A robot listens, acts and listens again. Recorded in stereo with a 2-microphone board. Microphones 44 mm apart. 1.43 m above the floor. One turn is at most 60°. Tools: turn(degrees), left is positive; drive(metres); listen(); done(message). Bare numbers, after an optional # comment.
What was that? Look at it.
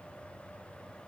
listen()
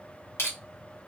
# The crushing: about 75° left or 105° left.
turn(60)
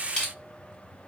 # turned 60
# So it is at 15° left.
turn(15)
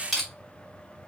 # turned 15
done("Facing the crushing, 1 to 2 m away.")